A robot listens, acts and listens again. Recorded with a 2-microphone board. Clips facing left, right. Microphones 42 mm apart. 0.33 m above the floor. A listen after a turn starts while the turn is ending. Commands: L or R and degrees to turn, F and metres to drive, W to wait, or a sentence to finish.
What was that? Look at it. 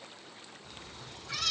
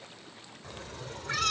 R50
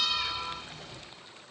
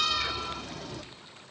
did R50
R80
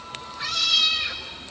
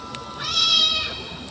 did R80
R75
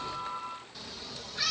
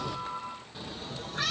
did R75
R40
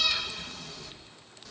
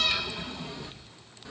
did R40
R20
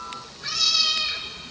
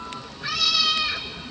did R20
R10
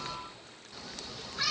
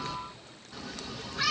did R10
Facing the cat meowing.